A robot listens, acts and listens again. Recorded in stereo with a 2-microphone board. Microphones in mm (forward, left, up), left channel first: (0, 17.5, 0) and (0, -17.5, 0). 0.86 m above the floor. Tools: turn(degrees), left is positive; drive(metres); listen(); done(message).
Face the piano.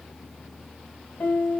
turn(degrees=60)
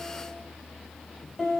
done("Facing the piano.")